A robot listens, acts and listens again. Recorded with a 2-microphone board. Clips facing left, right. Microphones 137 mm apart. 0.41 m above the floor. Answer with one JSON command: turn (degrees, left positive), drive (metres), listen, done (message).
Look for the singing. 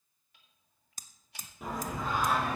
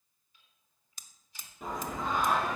{"turn": 30}
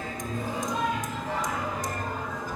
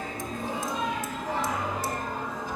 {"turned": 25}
{"turn": -30}
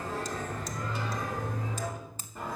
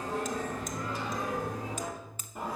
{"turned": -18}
{"turn": -15}
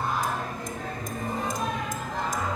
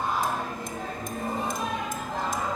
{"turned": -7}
{"done": "Found it: singing, straight ahead."}